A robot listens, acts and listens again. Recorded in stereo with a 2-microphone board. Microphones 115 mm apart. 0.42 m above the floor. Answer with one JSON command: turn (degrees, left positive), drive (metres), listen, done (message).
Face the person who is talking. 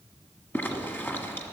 {"listen": true}
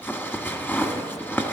{"listen": true}
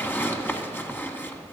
{"done": "I can't make out anyone speaking to turn to."}